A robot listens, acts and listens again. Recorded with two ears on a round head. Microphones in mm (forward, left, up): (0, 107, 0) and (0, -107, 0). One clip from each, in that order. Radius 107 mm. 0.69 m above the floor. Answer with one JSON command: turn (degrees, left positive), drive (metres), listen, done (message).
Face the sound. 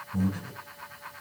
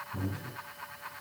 {"turn": 65}
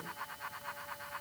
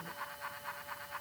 {"listen": true}
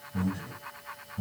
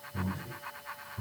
{"turn": 50}
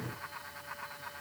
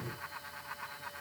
{"turn": 20}
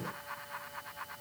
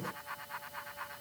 {"listen": true}
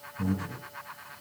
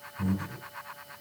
{"done": "Facing the breathing."}